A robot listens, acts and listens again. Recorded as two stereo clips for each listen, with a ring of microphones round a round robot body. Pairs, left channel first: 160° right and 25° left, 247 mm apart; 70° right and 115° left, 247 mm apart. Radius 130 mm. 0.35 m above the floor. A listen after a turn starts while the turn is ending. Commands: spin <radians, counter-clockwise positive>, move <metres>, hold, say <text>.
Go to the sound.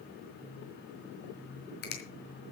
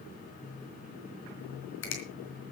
spin -1.92
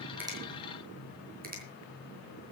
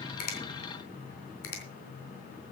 spin -0.61
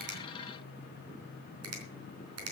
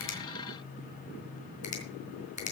move 1.0
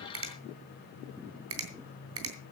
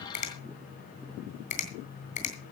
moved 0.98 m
move 1.0
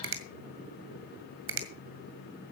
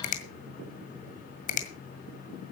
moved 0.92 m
spin -0.17
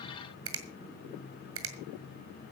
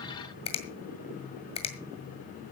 move 1.0
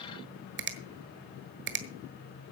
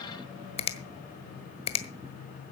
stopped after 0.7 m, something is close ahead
say I am next to the finger snap.